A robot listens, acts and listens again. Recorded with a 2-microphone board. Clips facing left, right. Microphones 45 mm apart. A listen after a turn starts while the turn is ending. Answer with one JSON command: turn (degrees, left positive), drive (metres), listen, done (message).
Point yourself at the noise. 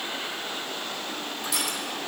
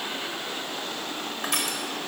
{"turn": -50}
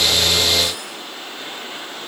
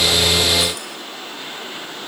{"listen": true}
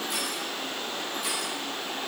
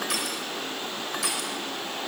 {"turn": -75}
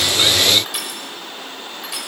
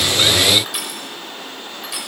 {"done": "Facing the crushing."}